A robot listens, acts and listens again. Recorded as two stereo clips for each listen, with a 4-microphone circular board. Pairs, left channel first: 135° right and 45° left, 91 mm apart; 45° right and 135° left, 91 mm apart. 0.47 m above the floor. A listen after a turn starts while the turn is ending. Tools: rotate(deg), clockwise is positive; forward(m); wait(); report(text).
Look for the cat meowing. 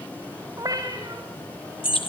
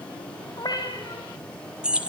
report("Found it: a cat meowing, straight ahead, over 4 m away.")